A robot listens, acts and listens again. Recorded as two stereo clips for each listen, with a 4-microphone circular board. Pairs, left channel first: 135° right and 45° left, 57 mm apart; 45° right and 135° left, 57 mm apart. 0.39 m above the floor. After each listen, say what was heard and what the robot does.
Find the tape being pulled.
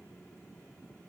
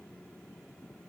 Keep listening.
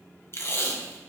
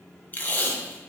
The tape being pulled: 100° right. Turn 100° right.
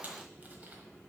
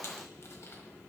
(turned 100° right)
Keep listening.
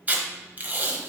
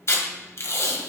The tape being pulled is now 15° right. Turn 15° right.
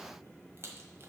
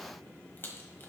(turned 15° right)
Keep listening.
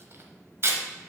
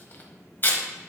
Found it: tape being pulled, straight ahead, 1 to 2 m away.